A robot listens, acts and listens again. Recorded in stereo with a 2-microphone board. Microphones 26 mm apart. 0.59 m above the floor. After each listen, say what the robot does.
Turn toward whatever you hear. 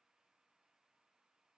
Keep listening.
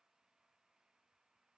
Keep listening.
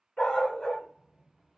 Turn 40° left.
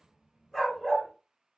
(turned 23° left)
Found it: a dog barking, straight ahead.